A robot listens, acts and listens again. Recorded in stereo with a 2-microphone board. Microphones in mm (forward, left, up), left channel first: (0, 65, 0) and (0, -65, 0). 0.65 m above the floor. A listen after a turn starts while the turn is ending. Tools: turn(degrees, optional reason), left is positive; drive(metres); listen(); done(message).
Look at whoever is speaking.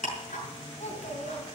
turn(degrees=55, reason="The child speaking: about 55° left or 125° left.")
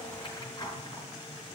listen()
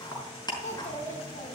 turn(degrees=70, reason="So it is at 70° left.")
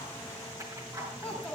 turn(degrees=10, reason="The child speaking is now 10° left.")
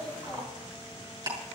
done("Found it: a child speaking, straight ahead.")